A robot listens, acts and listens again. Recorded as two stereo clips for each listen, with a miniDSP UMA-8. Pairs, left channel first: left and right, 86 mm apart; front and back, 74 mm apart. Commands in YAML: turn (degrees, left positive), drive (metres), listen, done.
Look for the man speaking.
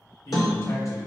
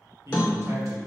turn: 135
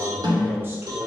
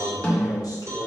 turn: -35
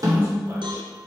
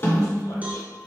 listen: true
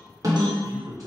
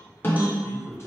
turn: -50
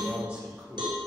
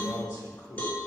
turn: -15
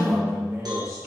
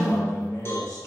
done: "Found it: a man speaking, straight ahead, 1 to 2 m away."